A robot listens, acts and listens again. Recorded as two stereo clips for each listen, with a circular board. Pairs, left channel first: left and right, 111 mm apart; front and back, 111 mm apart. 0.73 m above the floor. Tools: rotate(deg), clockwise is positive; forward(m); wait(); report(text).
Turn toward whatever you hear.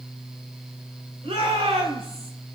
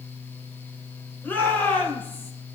rotate(70)
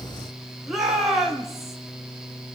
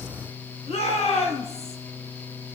report("Found it: a shout, straight ahead.")